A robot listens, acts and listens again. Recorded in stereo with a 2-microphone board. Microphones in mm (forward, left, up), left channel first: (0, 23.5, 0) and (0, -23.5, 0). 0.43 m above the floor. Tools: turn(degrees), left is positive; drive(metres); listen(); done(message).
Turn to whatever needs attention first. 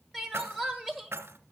turn(degrees=30)
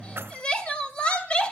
turn(degrees=145)
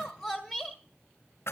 done("Facing the crying, 1 to 2 m away.")